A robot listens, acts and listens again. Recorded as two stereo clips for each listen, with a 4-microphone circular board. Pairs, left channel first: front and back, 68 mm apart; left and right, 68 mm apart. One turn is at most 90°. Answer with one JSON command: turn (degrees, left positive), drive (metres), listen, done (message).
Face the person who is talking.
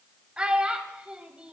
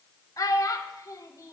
{"turn": 90}
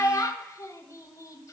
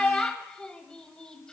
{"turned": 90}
{"turn": 15}
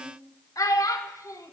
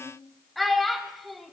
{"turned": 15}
{"done": "Facing the child speaking."}